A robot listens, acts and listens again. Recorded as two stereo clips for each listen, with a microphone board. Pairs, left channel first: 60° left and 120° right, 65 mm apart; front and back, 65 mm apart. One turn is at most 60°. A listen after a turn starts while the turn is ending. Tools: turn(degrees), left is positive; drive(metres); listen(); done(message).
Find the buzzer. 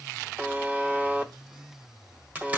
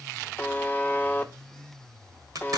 turn(degrees=-60)
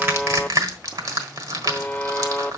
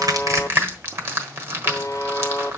done("Facing the buzzer, under 1 m away.")